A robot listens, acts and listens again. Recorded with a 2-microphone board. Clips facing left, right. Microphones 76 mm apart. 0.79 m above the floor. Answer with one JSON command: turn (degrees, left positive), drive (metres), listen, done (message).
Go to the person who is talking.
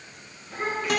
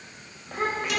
{"turn": -55}
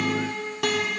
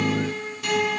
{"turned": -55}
{"listen": true}
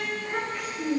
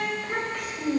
{"turn": -70}
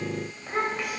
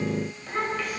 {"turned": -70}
{"turn": 15}
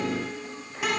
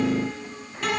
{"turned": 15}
{"listen": true}
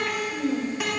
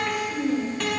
{"drive": 1.0}
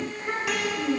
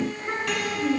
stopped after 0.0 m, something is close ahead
{"done": "Something is in my way. I am facing the child speaking but have not reached it."}